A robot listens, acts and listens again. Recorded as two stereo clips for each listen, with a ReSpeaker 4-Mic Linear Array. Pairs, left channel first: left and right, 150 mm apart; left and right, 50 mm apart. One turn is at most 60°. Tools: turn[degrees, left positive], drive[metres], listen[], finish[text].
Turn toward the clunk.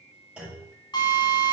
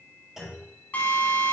Action: turn[-30]
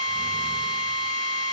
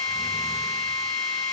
Action: listen[]
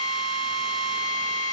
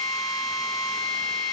Action: finish[I heard a clunk, but can't make it out now. It was about 20° left or 140° right.]